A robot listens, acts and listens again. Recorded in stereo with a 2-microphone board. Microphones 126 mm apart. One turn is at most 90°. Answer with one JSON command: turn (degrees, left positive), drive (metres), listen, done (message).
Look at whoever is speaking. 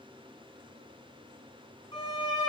{"listen": true}
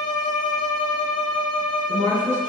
{"turn": -90}
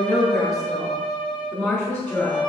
{"done": "Found it: a woman speaking, straight ahead, over 4 m away."}